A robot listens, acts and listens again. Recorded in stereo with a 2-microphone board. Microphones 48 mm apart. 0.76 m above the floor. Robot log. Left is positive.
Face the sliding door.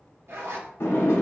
note: The sliding door: about 70° left or 110° left.
cmd yaw +70
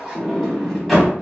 end: Found it: a sliding door, straight ahead, under 1 m away.